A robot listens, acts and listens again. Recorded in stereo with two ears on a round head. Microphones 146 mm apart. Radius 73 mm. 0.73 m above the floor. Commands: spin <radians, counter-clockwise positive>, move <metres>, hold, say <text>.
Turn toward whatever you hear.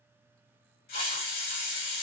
spin 1.05
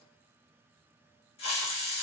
spin 0.70
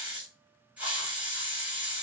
spin -0.17
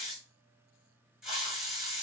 say Facing the hiss.